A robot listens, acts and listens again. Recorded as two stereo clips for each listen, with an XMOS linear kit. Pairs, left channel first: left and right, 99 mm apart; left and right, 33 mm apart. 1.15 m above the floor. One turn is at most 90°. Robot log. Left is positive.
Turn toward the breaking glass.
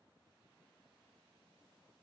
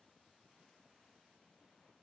cmd idle
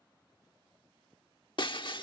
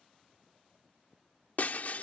note: The breaking glass: about 55° left or 125° left.
cmd yaw +55
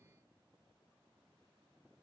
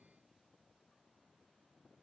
cmd idle
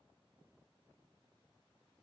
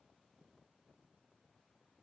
end: I heard breaking glass, but can't make it out now. It was about straight ahead or 70° left.